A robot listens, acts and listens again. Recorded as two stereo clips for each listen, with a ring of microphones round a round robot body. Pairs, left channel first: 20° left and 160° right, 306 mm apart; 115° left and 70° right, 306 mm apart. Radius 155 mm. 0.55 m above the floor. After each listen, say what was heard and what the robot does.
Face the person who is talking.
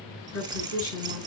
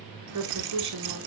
The woman speaking: 30° right. Turn 30° right.
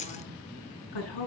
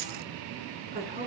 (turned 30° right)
Facing the woman speaking.